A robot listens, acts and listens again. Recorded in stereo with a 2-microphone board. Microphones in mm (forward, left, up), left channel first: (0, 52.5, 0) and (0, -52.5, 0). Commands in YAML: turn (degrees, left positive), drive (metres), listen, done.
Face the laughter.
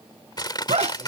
turn: -90
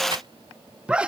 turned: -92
turn: -10
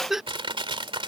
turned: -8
done: "Found it: laughter, straight ahead."